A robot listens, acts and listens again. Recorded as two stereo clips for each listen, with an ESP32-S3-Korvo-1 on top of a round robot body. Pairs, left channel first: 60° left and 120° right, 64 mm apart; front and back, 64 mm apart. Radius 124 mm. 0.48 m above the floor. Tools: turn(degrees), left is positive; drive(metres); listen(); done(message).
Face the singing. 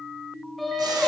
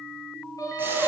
turn(degrees=-25)
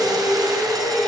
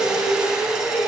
done("Found it: singing, straight ahead, over 4 m away.")